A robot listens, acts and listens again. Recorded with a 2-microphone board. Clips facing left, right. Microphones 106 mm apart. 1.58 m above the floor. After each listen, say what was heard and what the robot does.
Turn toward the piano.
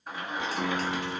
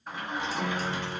The piano: about 45° left or 135° left. Turn 45° left.
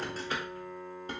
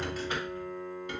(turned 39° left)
Facing the piano, 2 to 4 m away.